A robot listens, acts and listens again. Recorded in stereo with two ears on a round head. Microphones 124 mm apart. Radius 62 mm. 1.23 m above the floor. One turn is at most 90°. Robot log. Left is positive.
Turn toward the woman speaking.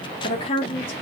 note: The woman speaking: about 40° left or 140° left.
cmd yaw +40
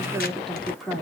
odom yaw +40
end: Found it: a woman speaking, straight ahead.